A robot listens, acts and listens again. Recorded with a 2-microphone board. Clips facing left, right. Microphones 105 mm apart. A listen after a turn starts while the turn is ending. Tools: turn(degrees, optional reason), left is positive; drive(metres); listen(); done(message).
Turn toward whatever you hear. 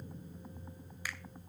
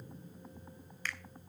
turn(degrees=30)
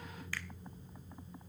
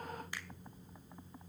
listen()
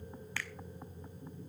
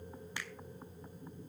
turn(degrees=-20, reason="So it is at 20° right.")
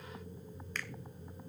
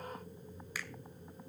turn(degrees=-10, reason="The finger snap is now 10° right.")
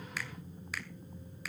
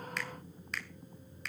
done("Found it: a finger snap, straight ahead.")